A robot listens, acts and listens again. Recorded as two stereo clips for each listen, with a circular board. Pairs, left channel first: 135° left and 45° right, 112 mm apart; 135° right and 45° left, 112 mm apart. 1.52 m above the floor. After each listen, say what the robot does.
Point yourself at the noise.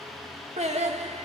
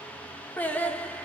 Turn 55° right.
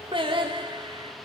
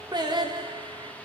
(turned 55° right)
Found it: singing, straight ahead.